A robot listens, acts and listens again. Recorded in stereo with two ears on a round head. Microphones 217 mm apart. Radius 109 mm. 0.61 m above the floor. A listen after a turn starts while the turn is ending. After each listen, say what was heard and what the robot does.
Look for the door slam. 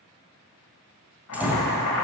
Turn 30° right.
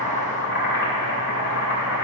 Keep listening.
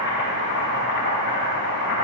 I heard a door slam, but can't make it out now. It was about 25° left or 145° right.